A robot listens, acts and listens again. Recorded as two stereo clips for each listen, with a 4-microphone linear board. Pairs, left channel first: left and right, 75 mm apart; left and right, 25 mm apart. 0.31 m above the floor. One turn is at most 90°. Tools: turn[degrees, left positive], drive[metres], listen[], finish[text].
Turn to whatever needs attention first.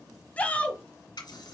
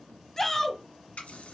Thought: The shout: about 20° left or 160° left.
Action: turn[20]
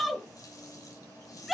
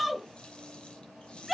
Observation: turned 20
Action: finish[Found it: a shout, straight ahead.]